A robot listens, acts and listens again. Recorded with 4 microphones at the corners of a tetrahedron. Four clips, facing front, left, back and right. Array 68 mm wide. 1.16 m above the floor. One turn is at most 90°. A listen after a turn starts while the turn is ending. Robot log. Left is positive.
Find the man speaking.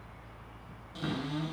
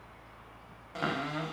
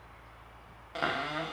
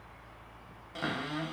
cmd idle
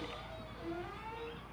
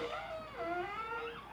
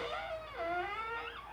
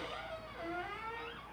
cmd idle
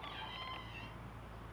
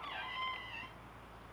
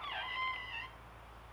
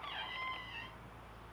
end: I can't make out a man speaking to turn to.